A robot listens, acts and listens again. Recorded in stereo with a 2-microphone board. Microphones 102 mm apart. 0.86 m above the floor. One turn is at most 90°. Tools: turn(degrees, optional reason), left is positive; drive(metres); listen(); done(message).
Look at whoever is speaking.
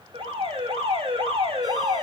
listen()
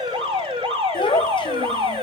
turn(degrees=55, reason="The child speaking: about 55° left or 125° left.")
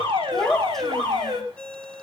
done("Facing the child speaking, 2 to 4 m away.")